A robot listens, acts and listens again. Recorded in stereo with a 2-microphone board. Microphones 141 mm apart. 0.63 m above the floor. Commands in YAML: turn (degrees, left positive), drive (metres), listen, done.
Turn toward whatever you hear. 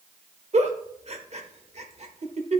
turn: -50
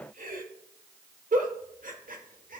turn: -80
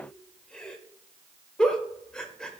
done: "Found it: a giggle, straight ahead, 1 to 2 m away."